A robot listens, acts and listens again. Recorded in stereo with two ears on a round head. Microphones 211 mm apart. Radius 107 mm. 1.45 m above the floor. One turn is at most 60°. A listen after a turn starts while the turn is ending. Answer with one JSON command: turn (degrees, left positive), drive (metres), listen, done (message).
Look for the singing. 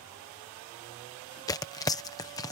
{"listen": true}
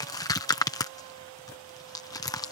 {"listen": true}
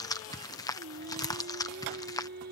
{"turn": -40}
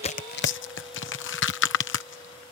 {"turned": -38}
{"listen": true}
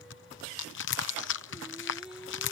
{"done": "Found it: singing, straight ahead."}